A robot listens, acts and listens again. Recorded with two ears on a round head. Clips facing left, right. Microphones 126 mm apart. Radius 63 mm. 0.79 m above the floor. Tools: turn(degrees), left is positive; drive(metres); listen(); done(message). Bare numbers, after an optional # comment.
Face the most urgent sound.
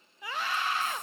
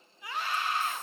# The scream: about 65° left or 115° left.
turn(65)
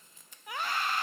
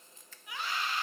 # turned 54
# So it is at 45° left.
turn(45)
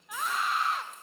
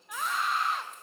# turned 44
done("Found it: a scream, straight ahead, under 1 m away.")